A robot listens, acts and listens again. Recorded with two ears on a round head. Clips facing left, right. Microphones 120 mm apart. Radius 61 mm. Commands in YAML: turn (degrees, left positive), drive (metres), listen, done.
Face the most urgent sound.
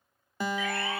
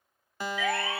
turn: -55
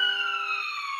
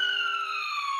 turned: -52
done: "Found it: a siren, straight ahead."